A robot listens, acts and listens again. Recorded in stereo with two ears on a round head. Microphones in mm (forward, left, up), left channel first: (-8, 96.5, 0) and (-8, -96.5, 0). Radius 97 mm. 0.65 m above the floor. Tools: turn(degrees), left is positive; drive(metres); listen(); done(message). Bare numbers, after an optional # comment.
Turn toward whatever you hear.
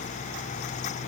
listen()
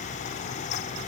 listen()
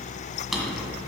turn(30)
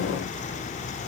listen()
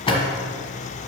# So it is at 155° left.
turn(155)
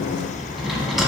done("Found it: a drawer, straight ahead.")